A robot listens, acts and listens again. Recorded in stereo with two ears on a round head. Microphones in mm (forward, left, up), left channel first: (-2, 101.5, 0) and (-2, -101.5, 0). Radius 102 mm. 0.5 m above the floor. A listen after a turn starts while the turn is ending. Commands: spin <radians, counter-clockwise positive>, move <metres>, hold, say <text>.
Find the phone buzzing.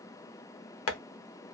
hold
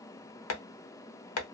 hold
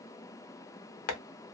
say I can't make out a phone buzzing, only tapping.